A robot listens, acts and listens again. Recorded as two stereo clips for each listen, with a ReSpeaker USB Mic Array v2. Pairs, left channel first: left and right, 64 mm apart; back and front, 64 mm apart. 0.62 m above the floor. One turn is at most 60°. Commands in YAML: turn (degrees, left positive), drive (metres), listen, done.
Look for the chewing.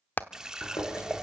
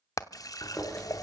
turn: 60
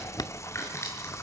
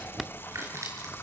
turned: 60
turn: 45
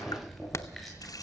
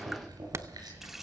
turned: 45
done: "Facing the chewing, over 4 m away."